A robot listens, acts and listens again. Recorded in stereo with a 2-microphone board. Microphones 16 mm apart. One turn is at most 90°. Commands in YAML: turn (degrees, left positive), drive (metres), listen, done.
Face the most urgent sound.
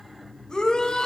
turn: 70
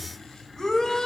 turn: 40
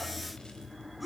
done: "Found it: a shout, straight ahead, 2 to 4 m away."